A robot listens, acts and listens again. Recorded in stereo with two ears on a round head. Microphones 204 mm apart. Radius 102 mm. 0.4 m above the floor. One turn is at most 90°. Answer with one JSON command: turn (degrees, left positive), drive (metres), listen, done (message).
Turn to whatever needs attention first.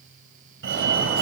{"turn": -50}
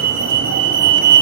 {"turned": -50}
{"turn": -65}
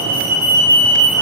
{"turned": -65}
{"turn": -10}
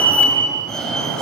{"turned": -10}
{"done": "Found it: a fire alarm, straight ahead."}